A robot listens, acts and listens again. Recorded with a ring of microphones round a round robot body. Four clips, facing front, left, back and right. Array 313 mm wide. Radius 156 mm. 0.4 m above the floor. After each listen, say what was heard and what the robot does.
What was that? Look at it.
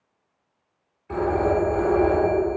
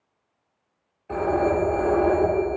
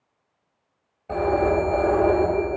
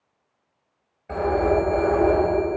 The phone ringing: 155° right. Turn 155° right.
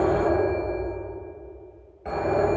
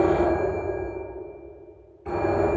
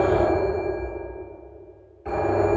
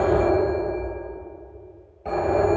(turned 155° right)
The phone ringing is now 60° right. Turn 60° right.
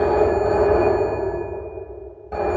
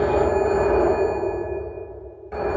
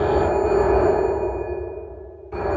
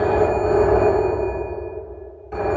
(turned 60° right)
The phone ringing is now 25° left. Turn 25° left.
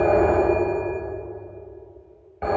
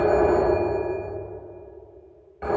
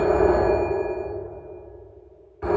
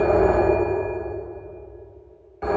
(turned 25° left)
The phone ringing is now 10° left. Turn 10° left.
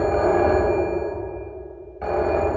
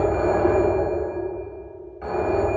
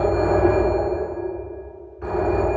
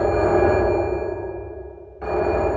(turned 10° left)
Facing the phone ringing, 1 to 2 m away.